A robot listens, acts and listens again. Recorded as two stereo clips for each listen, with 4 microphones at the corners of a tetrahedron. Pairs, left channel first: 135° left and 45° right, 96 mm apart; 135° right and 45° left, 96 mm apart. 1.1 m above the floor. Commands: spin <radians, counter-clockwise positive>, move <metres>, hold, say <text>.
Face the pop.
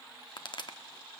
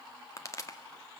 spin 2.97
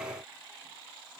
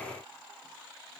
say Facing where the pop came from. I can't hear it now.